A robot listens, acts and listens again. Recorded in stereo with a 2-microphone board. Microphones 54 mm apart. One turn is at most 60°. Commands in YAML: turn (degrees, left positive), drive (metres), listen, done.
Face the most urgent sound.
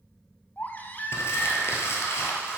turn: 35
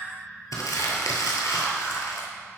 done: "Facing the baby crying."